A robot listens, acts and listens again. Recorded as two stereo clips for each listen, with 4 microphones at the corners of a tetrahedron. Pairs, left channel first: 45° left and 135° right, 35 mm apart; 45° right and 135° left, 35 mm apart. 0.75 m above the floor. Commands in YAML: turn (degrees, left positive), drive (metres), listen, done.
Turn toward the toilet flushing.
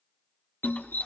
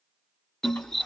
turn: -20
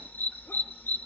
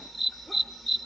listen: true
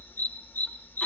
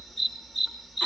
listen: true
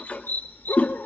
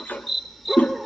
done: "Found it: a toilet flushing, straight ahead, under 1 m away."